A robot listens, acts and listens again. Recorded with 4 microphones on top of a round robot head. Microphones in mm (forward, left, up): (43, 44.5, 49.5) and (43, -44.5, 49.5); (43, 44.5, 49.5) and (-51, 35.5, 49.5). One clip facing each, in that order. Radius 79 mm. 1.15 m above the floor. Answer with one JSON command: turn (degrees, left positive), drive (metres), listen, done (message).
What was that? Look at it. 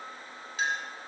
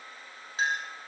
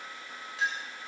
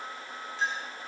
{"turn": -35}
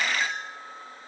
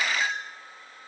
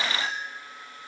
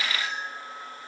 {"turn": -10}
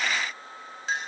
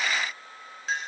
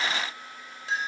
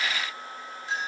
{"done": "Found it: a clink, straight ahead."}